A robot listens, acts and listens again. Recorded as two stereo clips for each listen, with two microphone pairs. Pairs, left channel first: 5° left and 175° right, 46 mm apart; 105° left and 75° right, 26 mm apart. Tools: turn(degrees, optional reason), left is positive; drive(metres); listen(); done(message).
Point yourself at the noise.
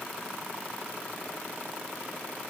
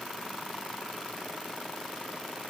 listen()
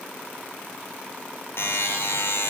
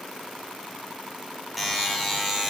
turn(degrees=15, reason="The buzzer: 15° left.")
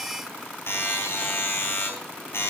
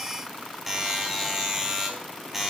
done("Found it: a buzzer, straight ahead, 2 to 4 m away.")